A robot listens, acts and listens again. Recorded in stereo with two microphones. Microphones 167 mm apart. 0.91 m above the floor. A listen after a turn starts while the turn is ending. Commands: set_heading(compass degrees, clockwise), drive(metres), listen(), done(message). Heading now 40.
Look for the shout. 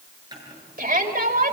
set_heading(105)
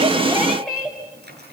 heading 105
done("Facing the shout, over 4 m away.")